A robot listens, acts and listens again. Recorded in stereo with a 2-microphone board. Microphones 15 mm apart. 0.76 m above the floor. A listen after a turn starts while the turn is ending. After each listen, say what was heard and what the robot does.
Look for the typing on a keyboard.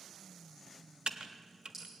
Turn 90° right.
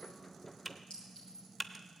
Facing the typing on a keyboard.